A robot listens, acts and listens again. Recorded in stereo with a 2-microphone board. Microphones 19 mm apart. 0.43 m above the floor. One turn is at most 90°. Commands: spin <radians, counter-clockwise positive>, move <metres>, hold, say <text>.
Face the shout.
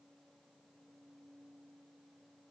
hold
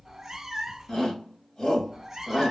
spin 0.87
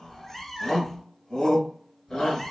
spin 1.13
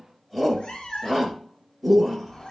say Facing the shout, 1 to 2 m away.